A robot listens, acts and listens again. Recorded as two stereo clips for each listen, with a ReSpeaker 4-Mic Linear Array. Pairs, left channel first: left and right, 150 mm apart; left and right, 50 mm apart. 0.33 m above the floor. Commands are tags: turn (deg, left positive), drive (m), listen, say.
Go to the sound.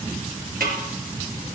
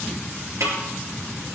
<turn deg="-90"/>
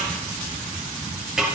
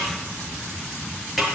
<drive m="1.0"/>
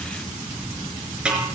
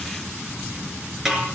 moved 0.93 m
<drive m="1.0"/>
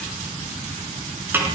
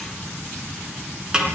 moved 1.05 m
<turn deg="-15"/>
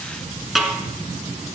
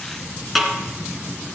<drive m="1.0"/>
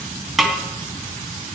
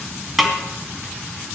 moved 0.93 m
<drive m="1.0"/>
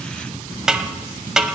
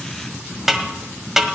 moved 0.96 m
<drive m="1.0"/>
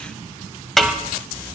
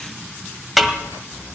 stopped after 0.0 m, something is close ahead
<say>Arrived at the snare drum, straight ahead.</say>